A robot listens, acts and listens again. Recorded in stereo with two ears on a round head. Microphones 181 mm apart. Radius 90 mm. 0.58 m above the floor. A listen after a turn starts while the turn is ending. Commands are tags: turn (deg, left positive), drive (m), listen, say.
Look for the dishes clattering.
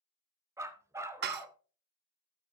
<turn deg="-55"/>
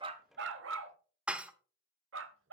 <say>Found it: dishes clattering, straight ahead.</say>